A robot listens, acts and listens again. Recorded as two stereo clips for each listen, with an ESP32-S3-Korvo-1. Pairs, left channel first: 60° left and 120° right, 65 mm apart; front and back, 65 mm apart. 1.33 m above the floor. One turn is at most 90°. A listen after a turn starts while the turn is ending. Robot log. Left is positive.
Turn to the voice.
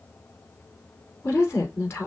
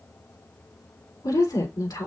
note: The woman speaking: 10° left.
cmd yaw +10
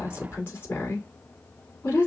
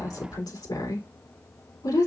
end: Found it: a woman speaking, straight ahead, 2 to 4 m away.